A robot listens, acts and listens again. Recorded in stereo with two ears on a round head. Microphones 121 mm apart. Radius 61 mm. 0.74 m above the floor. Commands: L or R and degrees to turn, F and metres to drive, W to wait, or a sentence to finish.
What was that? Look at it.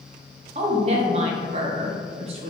R50
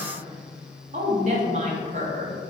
R70
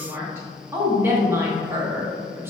R20
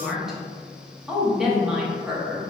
Facing the woman speaking.